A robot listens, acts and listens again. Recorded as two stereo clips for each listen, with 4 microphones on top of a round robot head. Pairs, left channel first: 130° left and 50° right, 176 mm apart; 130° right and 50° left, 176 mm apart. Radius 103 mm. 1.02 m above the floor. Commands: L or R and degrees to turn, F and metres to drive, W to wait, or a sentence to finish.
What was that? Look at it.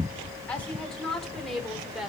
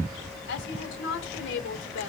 R135
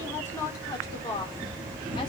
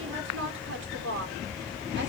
L60
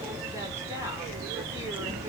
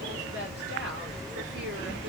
W
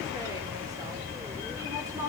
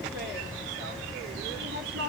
W
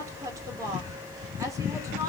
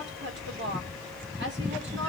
L25
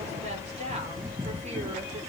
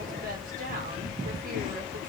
W
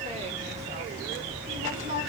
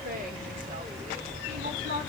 Found it: a woman speaking, straight ahead.